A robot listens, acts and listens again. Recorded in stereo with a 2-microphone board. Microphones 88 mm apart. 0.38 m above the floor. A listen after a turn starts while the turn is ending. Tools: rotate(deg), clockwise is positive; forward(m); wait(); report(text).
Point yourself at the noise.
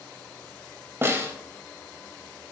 rotate(30)
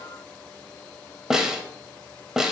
rotate(10)
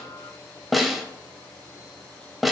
report("Found it: a snare drum, straight ahead.")